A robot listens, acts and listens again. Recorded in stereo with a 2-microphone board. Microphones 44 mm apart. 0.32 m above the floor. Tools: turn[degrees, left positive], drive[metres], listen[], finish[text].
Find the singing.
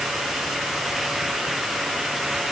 Action: listen[]
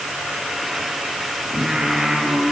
Action: turn[-30]
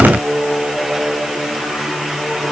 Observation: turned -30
Thought: So it is at 25° left.
Action: turn[25]
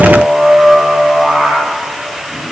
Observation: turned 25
Action: finish[Found it: singing, straight ahead, over 4 m away.]